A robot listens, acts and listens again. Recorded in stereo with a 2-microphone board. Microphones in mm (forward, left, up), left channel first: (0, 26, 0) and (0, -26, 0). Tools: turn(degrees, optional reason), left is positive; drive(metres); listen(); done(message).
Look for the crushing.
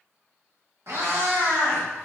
listen()
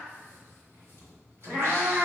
listen()
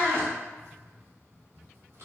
done("I can't make out crushing to turn to.")